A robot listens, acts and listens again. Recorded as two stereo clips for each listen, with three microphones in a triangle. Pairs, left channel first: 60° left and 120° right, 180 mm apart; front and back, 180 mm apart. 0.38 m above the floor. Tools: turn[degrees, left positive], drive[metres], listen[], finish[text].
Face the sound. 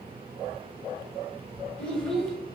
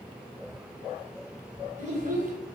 Thought: The child speaking: 145° left.
Action: turn[145]
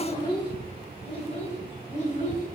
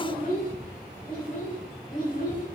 Thought: The child speaking is now 25° left.
Action: turn[25]
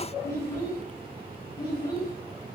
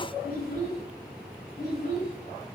Action: finish[Found it: a child speaking, straight ahead.]